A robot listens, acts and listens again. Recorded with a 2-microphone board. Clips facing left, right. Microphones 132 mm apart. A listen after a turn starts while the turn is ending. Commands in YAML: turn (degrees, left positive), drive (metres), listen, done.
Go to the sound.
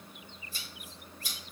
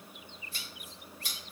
turn: -65
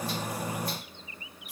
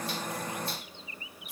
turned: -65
turn: -30
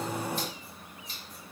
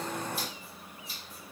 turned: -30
listen: true
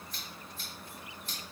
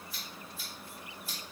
drive: 1.0
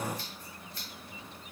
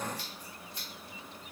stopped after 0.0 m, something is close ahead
turn: -20
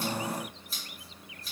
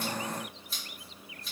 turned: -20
done: "Blocked. The scissors is further on, straight ahead."